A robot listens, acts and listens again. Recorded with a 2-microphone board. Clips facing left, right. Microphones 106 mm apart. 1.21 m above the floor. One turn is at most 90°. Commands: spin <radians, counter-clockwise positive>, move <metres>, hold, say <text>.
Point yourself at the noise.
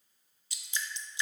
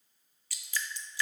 spin 0.35
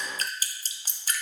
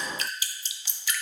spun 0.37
spin 1.57
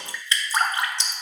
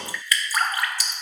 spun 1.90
spin 0.44
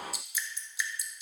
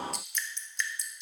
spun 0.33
say Facing the dripping, 1 to 2 m away.